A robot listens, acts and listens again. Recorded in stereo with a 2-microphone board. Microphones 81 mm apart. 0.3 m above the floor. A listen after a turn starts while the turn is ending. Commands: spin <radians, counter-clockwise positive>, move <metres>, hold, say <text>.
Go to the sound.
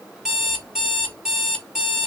spin -0.52
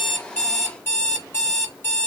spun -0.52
spin 0.44
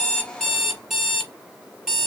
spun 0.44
move 1.0
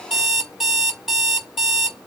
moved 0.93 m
move 1.0
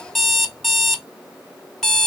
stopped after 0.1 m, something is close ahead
say Arrived at the alarm clock, straight ahead.